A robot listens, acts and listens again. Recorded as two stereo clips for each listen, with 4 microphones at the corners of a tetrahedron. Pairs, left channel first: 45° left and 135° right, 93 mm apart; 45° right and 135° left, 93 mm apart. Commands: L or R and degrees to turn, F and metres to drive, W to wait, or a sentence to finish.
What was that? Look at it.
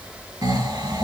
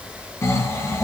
R100
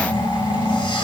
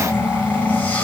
L25
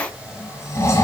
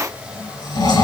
R10
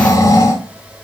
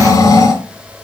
Found it: snoring, straight ahead, 1 to 2 m away.